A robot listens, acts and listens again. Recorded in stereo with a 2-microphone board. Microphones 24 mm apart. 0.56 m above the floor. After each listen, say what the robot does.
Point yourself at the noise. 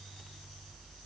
Keep listening.
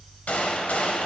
Turn 90° left.
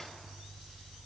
I heard a gunshot from this way, but can't make it out now.